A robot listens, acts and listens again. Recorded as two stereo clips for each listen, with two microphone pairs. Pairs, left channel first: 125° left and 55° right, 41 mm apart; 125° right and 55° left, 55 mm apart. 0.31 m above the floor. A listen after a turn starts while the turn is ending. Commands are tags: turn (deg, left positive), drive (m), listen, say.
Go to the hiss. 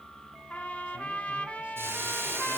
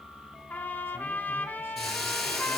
<turn deg="-40"/>
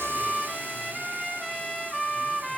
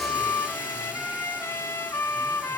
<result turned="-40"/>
<listen/>
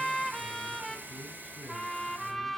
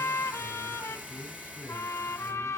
<listen/>
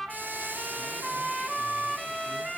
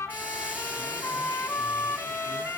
<say>Facing where the hiss came from. I can't hear it now. I did not reach it.</say>